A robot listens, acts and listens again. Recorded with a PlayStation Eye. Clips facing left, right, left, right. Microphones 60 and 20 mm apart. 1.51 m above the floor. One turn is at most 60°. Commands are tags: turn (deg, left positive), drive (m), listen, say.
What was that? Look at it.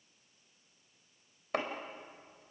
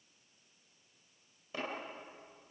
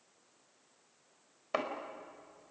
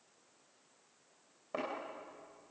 <turn deg="60"/>
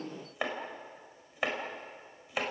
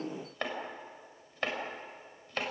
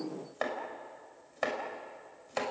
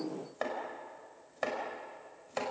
<turn deg="10"/>
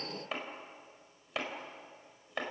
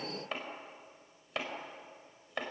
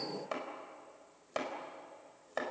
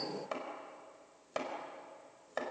<say>Found it: chopping, straight ahead, over 4 m away.</say>